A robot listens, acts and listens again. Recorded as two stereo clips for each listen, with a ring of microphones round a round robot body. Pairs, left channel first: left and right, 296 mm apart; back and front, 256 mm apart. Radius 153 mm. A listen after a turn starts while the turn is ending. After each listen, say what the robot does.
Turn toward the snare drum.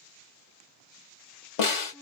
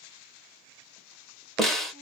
Turn 90° left.
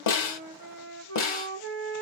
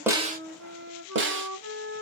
Turn 45° left.
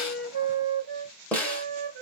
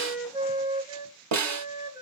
Found it: a snare drum, straight ahead.